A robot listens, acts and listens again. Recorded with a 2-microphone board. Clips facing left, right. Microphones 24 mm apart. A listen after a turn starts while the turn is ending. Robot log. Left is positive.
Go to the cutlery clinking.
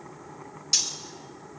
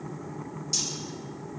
note: The cutlery clinking: about 45° left or 135° left.
cmd yaw +45
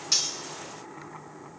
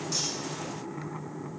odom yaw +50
cmd idle
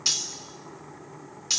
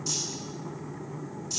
note: So it is at 85° left.
cmd yaw +85
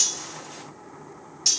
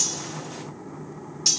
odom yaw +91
cmd fwd 1.0
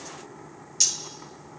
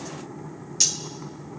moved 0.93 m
note: The cutlery clinking is now 10° right.
cmd yaw -10
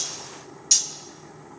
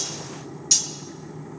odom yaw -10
cmd fwd 1.0
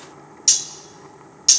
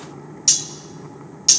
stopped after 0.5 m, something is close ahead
end: Arrived at the cutlery clinking, straight ahead.